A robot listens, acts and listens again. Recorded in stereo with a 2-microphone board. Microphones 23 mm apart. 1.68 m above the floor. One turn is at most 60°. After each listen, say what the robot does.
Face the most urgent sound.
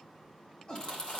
Turn 40° left.
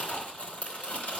Keep listening.
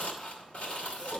Keep listening.
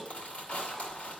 I heard a shout, but can't make it out now. It was about straight ahead or 100° left.